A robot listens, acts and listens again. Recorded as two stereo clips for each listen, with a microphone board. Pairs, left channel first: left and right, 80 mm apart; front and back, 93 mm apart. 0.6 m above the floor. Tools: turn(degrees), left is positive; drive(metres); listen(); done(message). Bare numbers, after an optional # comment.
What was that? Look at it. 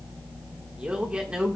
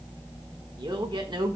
# The man speaking: 165° right.
turn(-165)
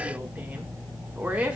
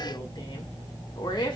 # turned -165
# The man speaking is now 20° right.
turn(-20)
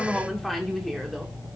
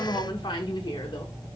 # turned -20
done("Found it: a man speaking, straight ahead.")